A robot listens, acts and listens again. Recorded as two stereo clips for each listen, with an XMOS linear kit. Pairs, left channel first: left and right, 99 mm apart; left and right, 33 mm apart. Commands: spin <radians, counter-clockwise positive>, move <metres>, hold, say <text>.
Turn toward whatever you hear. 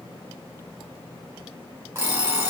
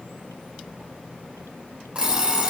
spin -0.44
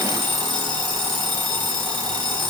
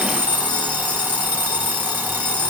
spin -2.27
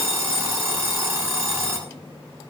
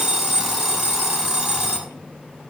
spin -0.35
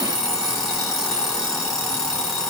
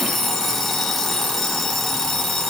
say Facing the alarm clock, 2 to 4 m away.